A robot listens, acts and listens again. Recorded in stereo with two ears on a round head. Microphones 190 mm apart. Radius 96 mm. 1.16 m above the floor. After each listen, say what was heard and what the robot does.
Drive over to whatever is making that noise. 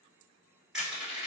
Turn 30° right.
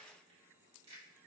Keep listening.
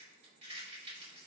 So it is at 145° right. Turn 145° right.
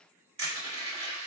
The crushing is now 30° right. Turn 30° right.
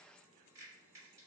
Keep listening.
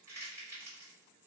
The crushing is now 15° right. Turn 15° right.
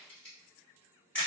Drive 1.0 m forward.
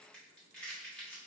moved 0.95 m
Drive 1.0 m forward.
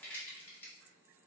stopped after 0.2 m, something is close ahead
The crushing is now 10° left. Turn 10° left.
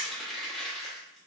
I am next to the crushing.